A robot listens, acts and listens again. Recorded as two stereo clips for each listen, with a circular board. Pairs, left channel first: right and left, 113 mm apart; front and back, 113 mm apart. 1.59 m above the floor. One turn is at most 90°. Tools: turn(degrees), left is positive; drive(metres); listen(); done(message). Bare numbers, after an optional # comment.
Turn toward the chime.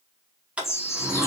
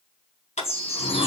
# The chime: 25° right.
turn(-25)
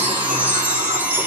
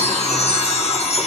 # The chime is now 20° left.
turn(20)
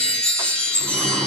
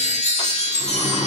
done("Found it: a chime, straight ahead.")